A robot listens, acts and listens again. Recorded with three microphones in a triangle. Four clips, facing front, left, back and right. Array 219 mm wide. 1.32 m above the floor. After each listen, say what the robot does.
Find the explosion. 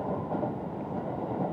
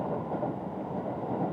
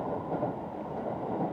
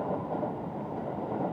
Keep listening.
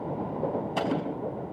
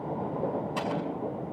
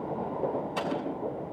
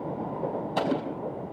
Turn 65° right.
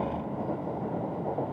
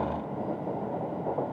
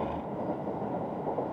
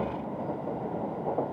I heard an explosion from this way, but can't make it out now.